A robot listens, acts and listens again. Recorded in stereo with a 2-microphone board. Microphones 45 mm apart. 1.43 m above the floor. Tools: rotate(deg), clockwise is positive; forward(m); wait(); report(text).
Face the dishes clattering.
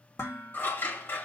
rotate(-75)
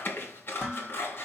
report("Found it: dishes clattering, straight ahead.")